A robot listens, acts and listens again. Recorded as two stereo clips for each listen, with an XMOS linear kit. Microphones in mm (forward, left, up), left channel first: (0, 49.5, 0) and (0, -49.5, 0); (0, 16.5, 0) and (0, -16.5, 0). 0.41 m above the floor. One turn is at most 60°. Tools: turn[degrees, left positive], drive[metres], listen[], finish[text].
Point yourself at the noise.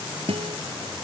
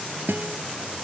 Action: turn[-60]
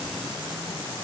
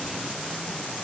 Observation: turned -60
Thought: Nothing new. It was at 30° right.
Action: turn[-30]
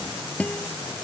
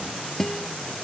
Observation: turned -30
Thought: The guitar is now 15° left.
Action: turn[15]
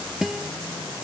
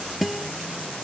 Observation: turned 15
Action: finish[Facing the guitar.]